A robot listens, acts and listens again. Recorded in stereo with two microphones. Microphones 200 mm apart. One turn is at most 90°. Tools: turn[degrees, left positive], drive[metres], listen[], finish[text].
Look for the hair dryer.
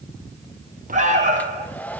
Action: turn[30]
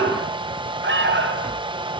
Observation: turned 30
Thought: So it is at 25° right.
Action: turn[-25]
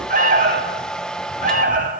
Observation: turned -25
Action: finish[Found it: a hair dryer, straight ahead, 1 to 2 m away.]